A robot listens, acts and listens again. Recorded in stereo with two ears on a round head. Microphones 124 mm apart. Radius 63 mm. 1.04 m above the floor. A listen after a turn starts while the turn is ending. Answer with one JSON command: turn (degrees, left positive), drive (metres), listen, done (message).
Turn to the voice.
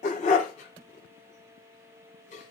{"listen": true}
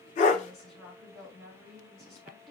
{"turn": 30}
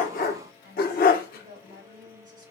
{"turn": -30}
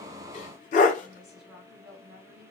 {"done": "Facing the woman speaking."}